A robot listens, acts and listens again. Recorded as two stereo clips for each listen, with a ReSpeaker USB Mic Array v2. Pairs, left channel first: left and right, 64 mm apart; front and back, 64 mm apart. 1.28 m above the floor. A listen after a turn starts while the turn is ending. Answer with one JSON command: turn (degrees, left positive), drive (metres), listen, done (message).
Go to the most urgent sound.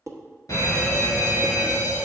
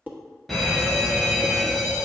{"turn": 85}
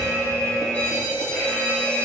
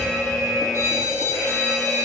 {"turn": 30}
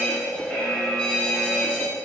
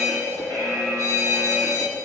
{"turn": 20}
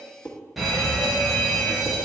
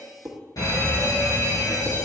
{"drive": 1.0}
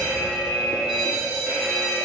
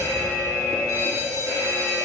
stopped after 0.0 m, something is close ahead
{"turn": -10}
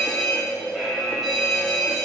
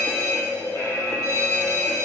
{"done": "Blocked. The fire alarm is further on, straight ahead."}